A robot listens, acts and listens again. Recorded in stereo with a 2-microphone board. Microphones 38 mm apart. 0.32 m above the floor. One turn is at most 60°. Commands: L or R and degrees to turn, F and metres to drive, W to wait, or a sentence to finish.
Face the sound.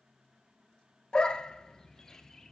L20
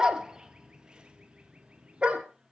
R30
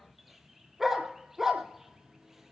R10
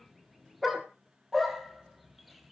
Found it: a dog barking, straight ahead.